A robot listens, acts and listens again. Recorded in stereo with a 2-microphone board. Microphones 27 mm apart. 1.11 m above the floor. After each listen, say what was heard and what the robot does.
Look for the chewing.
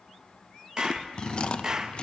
The chewing: about 45° left or 135° left. Turn 45° left.
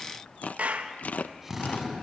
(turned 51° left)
So it is at 85° left. Turn 85° left.
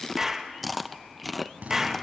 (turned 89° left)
Found it: chewing, straight ahead, under 1 m away.